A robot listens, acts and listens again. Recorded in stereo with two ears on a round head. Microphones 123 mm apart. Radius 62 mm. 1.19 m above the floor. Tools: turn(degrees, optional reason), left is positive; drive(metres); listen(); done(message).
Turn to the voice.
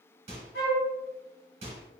listen()
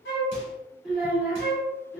turn(degrees=30)
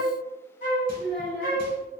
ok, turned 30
turn(degrees=-20, reason="So it is at 20° right.")
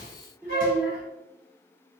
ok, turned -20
done("Found it: a child speaking, straight ahead, 1 to 2 m away.")